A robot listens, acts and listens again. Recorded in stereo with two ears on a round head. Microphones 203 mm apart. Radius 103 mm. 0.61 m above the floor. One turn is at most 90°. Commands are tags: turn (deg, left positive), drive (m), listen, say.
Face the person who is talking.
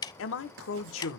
<turn deg="60"/>
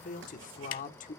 <turn deg="40"/>
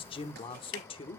<turn deg="25"/>
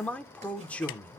<say>Found it: a man speaking, straight ahead, 1 to 2 m away.</say>